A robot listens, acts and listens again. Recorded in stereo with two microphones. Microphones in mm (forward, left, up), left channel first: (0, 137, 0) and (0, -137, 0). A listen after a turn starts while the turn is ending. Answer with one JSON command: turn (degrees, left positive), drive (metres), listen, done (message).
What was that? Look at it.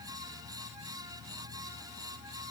{"listen": true}
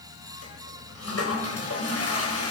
{"turn": 60}
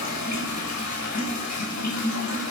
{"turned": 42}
{"turn": 80}
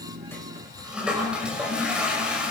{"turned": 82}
{"done": "Found it: a toilet flushing, straight ahead, over 4 m away."}